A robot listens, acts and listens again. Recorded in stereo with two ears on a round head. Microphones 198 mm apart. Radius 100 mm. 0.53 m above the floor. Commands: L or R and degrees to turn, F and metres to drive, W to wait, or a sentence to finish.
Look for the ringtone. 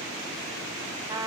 W
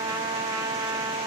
W
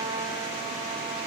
I can't make out a ringtone to turn to.